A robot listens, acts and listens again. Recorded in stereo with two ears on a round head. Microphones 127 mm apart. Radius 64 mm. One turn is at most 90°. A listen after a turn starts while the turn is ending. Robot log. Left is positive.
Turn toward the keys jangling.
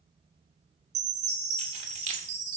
note: The keys jangling: about 55° right or 125° right.
cmd yaw -55
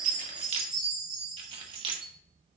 note: So it is at 35° right.
cmd yaw -35
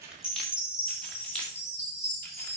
end: Found it: keys jangling, straight ahead.